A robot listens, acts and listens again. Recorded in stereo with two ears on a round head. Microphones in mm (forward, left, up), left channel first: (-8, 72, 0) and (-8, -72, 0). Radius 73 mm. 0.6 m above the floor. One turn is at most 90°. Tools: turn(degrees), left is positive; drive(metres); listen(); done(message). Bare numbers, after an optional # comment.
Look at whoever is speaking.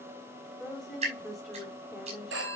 turn(30)
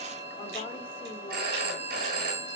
listen()
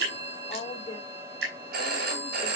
# So it is at 145° left.
turn(90)
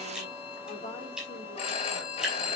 # Nothing new. It was at 55° left.
turn(55)
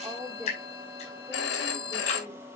done("Found it: a woman speaking, straight ahead.")